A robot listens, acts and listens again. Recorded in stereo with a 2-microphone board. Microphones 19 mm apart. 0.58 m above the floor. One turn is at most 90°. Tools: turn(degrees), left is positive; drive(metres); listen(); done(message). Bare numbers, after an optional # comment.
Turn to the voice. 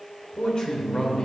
# The man speaking: about 45° left or 135° left.
turn(45)
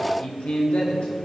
# So it is at 85° left.
turn(85)
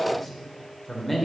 done("Facing the man speaking, 2 to 4 m away.")